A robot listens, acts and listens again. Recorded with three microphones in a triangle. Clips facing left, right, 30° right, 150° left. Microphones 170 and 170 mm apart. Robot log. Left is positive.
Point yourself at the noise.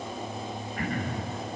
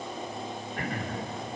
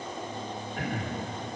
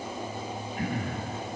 note: The throat clearing: 30° right.
cmd yaw -30
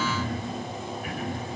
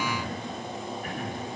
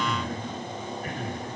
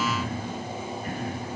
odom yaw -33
end: Found it: throat clearing, straight ahead.